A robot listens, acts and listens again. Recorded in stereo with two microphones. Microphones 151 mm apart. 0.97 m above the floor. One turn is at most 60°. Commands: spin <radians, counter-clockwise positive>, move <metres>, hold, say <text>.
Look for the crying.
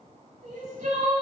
spin -1.05
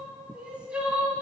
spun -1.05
spin -0.17
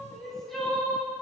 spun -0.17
say Found it: crying, straight ahead, 1 to 2 m away.